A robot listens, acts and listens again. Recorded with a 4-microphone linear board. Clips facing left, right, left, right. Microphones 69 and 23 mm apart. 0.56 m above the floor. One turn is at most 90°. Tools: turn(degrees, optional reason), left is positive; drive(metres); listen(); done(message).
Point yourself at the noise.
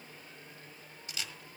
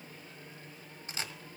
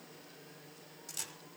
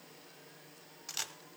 turn(degrees=-35, reason="The camera shutter: about 35° right or 145° right.")
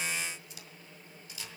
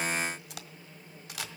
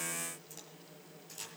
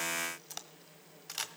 turn(degrees=-90, reason="So it is at 110° right.")
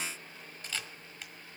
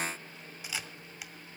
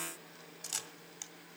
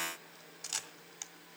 turn(degrees=-10, reason="The camera shutter is now 10° right.")
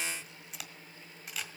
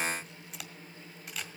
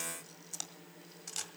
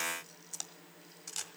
done("Found it: a camera shutter, straight ahead.")